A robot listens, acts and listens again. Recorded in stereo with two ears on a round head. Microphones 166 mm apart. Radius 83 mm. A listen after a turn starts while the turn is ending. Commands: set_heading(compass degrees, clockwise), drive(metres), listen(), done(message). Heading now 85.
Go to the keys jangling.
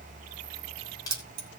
set_heading(135)
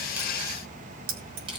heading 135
set_heading(215)
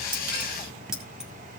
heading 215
drive(1.0)
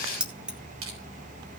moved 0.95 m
drive(1.0)
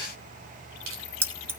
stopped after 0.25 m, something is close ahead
set_heading(230)
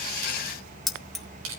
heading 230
done("I am next to the keys jangling.")